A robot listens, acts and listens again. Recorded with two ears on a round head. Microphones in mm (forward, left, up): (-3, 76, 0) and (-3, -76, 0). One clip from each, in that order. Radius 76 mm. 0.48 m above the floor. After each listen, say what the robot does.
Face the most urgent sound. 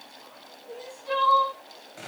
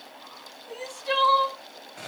Turn 55° right.
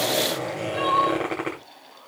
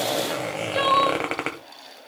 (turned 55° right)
Turn 70° right.
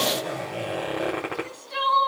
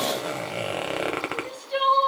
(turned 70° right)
Facing the crying.